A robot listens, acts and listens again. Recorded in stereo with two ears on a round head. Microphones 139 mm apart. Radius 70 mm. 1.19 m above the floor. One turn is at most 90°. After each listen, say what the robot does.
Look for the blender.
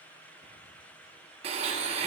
Turn 40° right.
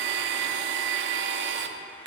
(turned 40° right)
Turn 90° right.
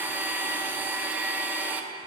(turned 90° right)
Turn 10° right.
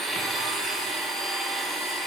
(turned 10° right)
Found it: a blender, straight ahead.